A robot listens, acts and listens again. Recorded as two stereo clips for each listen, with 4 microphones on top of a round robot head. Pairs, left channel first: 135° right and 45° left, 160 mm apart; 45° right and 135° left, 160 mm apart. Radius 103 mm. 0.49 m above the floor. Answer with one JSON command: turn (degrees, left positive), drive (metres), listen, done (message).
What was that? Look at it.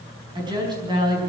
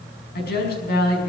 {"turn": -20}
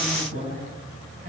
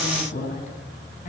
{"done": "Facing the woman speaking."}